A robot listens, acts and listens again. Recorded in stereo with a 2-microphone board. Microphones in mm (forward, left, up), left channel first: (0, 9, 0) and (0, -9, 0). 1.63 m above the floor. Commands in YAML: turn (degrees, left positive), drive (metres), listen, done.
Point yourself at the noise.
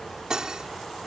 turn: -40
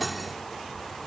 done: "Facing the cutlery clinking."